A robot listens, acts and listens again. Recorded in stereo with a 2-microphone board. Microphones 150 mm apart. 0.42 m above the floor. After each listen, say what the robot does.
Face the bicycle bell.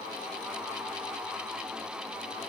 Keep listening.
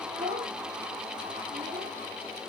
Keep listening.
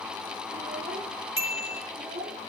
Turn 20° right.
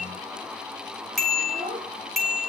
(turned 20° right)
Facing the bicycle bell, over 4 m away.